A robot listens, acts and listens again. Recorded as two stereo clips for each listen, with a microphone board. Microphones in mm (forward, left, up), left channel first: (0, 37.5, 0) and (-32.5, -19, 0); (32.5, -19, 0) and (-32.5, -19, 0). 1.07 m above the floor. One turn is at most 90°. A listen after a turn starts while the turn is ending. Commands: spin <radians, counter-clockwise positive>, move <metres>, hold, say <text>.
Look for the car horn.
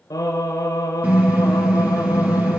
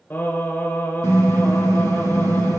spin 1.57
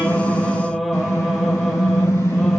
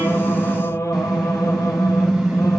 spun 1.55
spin 1.57
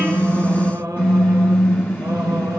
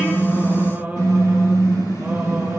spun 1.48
say Facing the car horn.